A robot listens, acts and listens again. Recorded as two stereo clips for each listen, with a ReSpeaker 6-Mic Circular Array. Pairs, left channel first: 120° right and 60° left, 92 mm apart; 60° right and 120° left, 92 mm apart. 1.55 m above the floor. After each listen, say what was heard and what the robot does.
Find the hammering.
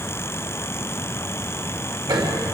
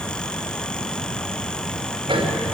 The hammering: 100° left. Turn 100° left.
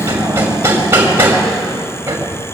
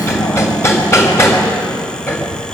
Facing the hammering.